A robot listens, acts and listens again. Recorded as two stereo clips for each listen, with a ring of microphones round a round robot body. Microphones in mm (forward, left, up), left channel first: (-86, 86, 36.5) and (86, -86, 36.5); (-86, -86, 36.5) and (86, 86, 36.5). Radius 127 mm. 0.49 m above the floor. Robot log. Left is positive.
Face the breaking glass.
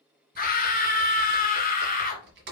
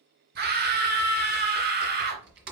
cmd idle
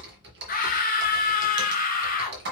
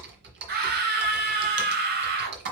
cmd idle
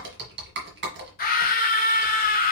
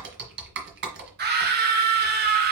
end: I can't make out breaking glass to turn to.